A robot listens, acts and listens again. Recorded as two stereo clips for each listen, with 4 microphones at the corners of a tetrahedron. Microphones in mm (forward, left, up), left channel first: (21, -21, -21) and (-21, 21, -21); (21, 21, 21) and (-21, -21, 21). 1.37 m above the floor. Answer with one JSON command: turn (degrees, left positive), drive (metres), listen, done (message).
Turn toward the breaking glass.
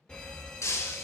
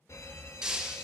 {"turn": -65}
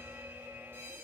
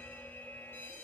{"done": "I heard breaking glass from this way, but can't make it out now."}